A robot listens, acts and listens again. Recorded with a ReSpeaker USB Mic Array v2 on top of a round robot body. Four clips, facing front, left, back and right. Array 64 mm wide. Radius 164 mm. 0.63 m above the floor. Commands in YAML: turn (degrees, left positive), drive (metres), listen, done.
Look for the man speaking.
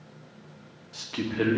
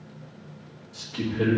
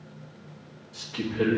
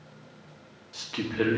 turn: -45
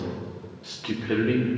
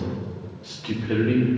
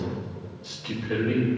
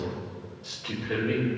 turn: 20
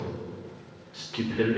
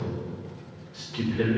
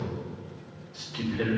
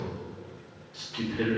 done: "Facing the man speaking."